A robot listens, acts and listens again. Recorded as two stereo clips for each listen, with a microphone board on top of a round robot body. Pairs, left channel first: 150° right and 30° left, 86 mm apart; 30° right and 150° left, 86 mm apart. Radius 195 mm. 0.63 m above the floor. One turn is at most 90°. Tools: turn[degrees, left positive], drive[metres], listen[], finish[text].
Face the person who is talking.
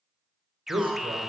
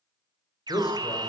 Thought: The man speaking: 10° left.
Action: turn[10]
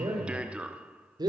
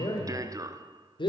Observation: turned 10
Action: finish[Found it: a man speaking, straight ahead, over 4 m away.]